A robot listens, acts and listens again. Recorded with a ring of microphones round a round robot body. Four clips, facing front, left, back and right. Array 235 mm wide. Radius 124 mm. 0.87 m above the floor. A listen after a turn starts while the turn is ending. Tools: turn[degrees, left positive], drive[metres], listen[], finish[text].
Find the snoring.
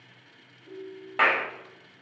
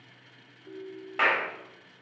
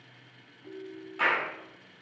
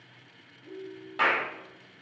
Action: listen[]
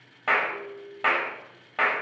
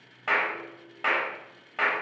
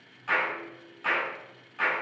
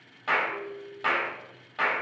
Action: listen[]
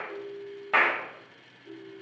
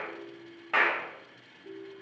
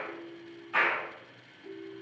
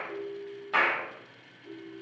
Action: finish[I can't make out snoring, only a clap and a ringtone.]